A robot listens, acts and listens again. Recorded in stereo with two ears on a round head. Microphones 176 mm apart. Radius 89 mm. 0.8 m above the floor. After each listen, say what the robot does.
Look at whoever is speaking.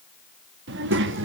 Turn 65° right.
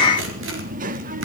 Turn 45° right.
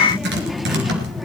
Facing the child speaking.